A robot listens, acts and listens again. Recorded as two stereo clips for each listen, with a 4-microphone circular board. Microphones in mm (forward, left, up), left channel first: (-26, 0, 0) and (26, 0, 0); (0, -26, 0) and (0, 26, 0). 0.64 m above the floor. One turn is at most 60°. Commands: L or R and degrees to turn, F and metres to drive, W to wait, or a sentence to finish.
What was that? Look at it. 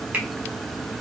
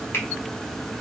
R60
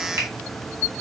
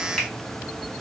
W
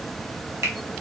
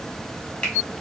R20
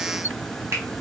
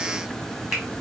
Facing the finger snap, 1 to 2 m away.